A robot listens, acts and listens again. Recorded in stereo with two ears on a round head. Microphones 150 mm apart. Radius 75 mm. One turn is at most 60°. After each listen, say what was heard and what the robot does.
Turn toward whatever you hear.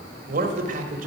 The man speaking: about 50° right or 130° right. Turn 50° right.
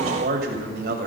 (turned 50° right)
So it is at 65° right. Turn 60° right.
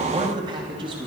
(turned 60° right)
The man speaking is now 30° right. Turn 30° right.
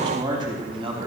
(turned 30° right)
The man speaking is now 30° right. Turn 30° right.
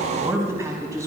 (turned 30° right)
The man speaking is now 20° right. Turn 20° right.
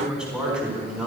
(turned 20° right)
Found it: a man speaking, straight ahead, over 4 m away.